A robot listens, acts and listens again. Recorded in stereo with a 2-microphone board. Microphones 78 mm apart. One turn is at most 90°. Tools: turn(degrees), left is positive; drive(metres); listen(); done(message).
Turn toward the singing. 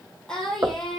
turn(degrees=30)
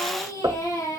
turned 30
turn(degrees=90)
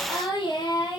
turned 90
turn(degrees=80)
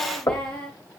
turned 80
turn(degrees=15)
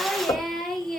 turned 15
done("Found it: singing, straight ahead, 2 to 4 m away.")